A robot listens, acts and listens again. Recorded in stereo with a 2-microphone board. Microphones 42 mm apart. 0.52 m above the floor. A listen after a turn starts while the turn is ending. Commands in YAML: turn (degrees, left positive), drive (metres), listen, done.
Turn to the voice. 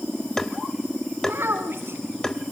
turn: -65
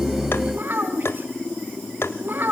turn: -50
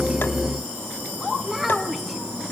done: "Facing the child speaking, 2 to 4 m away."